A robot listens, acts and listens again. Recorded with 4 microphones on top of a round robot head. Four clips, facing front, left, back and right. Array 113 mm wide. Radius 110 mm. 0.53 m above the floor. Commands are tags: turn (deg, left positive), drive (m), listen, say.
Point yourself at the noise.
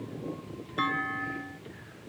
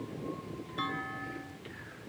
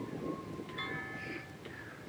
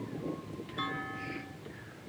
<say>Found it: a clunk, straight ahead.</say>